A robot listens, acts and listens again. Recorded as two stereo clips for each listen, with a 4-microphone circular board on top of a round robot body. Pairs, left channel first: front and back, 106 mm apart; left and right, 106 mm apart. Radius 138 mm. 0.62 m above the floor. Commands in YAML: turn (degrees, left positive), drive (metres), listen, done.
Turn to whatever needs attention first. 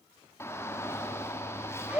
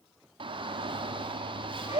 turn: -65
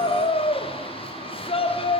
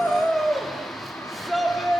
done: "Found it: a shout, straight ahead."